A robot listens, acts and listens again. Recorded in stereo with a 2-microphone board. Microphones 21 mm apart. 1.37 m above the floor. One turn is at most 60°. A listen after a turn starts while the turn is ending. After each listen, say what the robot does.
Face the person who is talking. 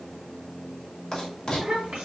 Turn 60° right.
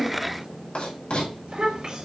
Turn 55° right.
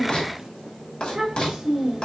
Turn 20° right.
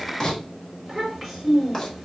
Facing the child speaking.